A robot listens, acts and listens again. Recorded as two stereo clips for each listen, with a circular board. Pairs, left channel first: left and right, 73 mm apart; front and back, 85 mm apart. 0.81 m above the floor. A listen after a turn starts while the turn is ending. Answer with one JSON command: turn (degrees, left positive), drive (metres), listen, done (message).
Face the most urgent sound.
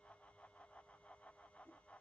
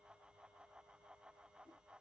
{"listen": true}
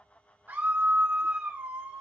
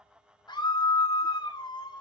{"turn": -25}
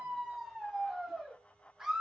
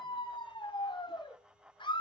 {"turn": -10}
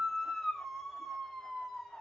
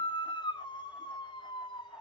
{"done": "Found it: a scream, straight ahead."}